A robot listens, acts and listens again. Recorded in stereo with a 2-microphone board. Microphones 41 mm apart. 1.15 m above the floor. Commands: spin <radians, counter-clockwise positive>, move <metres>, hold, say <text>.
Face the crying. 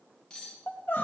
spin 1.05
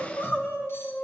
spin 1.13
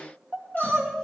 spin 0.26
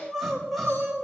say Found it: crying, straight ahead.